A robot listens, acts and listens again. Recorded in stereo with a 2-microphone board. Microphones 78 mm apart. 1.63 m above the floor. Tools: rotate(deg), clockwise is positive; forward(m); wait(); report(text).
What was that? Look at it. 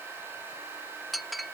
rotate(-30)
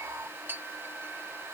rotate(30)
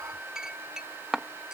rotate(10)
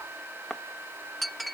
report("Found it: a clink, straight ahead.")